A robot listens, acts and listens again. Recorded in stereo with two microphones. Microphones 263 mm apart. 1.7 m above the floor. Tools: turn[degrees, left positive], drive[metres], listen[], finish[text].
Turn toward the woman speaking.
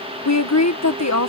Action: turn[90]
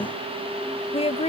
Thought: So it is at 25° left.
Action: turn[25]
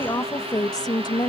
Thought: The woman speaking is now 15° left.
Action: turn[15]
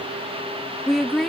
Action: finish[Found it: a woman speaking, straight ahead.]